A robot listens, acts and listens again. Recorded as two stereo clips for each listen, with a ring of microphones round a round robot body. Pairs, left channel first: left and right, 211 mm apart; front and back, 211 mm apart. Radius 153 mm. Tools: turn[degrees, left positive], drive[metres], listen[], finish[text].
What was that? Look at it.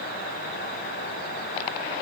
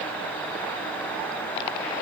Action: listen[]
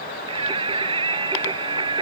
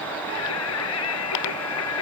Thought: The singing: 25° right.
Action: turn[-25]
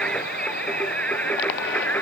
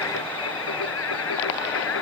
Thought: The singing is now 10° left.
Action: turn[10]
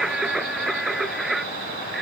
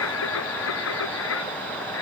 Action: finish[Facing the singing.]